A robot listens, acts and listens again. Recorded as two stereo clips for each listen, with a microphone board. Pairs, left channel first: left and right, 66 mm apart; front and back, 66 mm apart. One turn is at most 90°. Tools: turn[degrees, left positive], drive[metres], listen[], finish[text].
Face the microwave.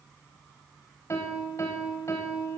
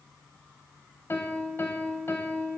Action: listen[]
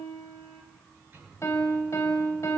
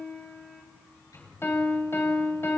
Thought: The microwave: 35° right.
Action: turn[-35]
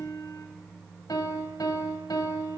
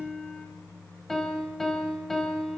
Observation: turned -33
Action: finish[Facing the microwave, over 4 m away.]